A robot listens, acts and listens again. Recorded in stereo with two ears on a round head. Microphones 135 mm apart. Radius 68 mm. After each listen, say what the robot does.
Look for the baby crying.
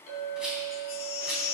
Turn 35° left.
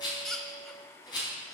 Found it: a baby crying, straight ahead, under 1 m away.